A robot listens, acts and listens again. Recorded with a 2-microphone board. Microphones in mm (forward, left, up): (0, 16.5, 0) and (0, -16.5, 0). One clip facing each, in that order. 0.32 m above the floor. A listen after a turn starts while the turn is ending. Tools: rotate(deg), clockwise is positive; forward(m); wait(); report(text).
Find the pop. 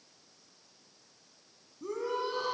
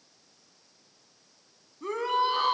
wait()
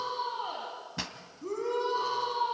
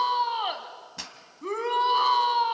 rotate(-15)
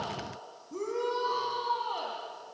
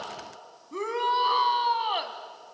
wait()
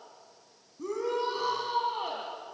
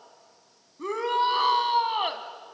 report("I heard a pop, but can't make it out now. It was about straight ahead or 150° left.")